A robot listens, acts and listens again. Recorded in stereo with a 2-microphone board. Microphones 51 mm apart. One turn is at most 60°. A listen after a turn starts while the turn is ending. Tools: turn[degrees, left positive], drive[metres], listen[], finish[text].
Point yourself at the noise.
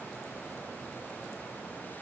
Action: listen[]
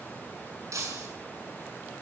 Action: turn[-60]
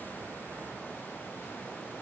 Thought: Nothing new. It was at 30° right.
Action: turn[-30]
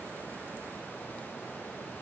Action: finish[I heard breaking glass from this way, but can't make it out now.]